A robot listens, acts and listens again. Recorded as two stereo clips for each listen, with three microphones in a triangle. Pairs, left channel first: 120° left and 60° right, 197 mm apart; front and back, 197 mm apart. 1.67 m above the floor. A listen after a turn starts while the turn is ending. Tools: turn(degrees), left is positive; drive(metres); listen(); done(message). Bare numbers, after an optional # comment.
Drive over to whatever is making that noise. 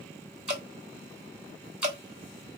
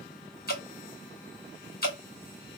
# The dripping: 25° left.
turn(25)
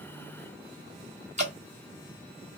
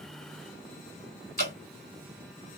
# The dripping is now 15° right.
turn(-15)
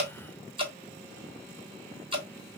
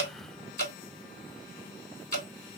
drive(1.0)
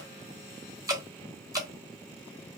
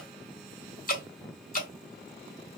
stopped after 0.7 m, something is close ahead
done("Arrived at the dripping, straight ahead.")